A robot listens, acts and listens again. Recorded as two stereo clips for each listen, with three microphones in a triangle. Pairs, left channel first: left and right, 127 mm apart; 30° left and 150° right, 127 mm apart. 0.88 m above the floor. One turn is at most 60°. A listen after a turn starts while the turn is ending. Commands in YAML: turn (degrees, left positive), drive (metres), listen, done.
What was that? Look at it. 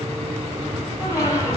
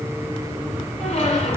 turn: 25
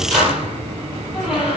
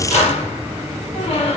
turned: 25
turn: -10
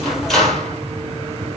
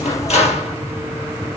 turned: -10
done: "Found it: a squeak, straight ahead."